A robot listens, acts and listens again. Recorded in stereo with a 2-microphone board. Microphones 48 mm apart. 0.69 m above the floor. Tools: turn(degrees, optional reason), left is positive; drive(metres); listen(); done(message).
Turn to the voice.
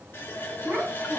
turn(degrees=-50, reason="The child speaking: about 50° right or 130° right.")
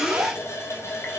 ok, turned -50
turn(degrees=-85, reason="So it is at 85° right.")
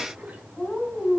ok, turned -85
turn(degrees=20, reason="The child speaking is now 20° left.")
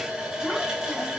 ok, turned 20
listen()
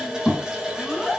turn(degrees=10, reason="The child speaking is now 10° left.")
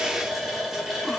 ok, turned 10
listen()
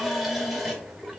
listen()
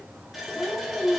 done("Found it: a child speaking, straight ahead.")